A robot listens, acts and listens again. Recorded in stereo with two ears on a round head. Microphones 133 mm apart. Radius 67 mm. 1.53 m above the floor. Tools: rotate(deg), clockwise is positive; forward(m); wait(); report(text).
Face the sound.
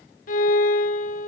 rotate(-65)
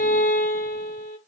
rotate(-50)
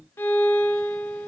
rotate(-15)
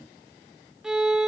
report("Found it: a violin, straight ahead.")